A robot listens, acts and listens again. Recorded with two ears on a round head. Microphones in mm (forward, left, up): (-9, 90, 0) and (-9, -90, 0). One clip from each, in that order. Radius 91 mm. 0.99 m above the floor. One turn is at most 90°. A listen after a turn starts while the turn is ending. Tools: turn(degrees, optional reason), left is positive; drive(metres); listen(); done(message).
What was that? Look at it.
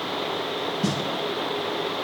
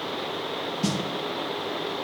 turn(degrees=-25, reason="The snare drum: about 25° right or 155° right.")
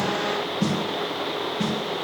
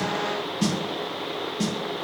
turn(degrees=-90, reason="So it is at 135° right.")
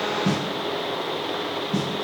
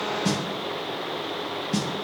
turn(degrees=-70, reason="The snare drum is now 70° right.")
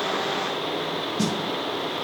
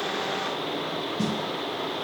turn(degrees=30, reason="The snare drum is now 30° left.")
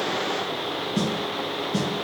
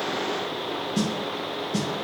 turn(degrees=-20, reason="The snare drum is now 20° right.")
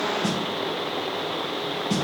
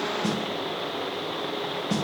done("Found it: a snare drum, straight ahead, 2 to 4 m away.")